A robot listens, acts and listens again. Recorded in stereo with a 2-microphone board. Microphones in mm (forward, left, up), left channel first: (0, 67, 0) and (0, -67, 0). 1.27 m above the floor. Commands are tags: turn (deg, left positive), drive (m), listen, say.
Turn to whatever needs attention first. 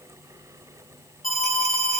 <turn deg="90"/>
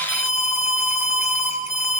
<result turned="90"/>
<say>Found it: an alarm, straight ahead, 2 to 4 m away.</say>